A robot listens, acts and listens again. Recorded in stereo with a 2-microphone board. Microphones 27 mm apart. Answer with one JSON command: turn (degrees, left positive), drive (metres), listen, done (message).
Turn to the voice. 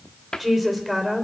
{"turn": 30}
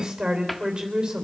{"turn": -30}
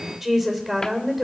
{"done": "Found it: a woman speaking, straight ahead, 2 to 4 m away."}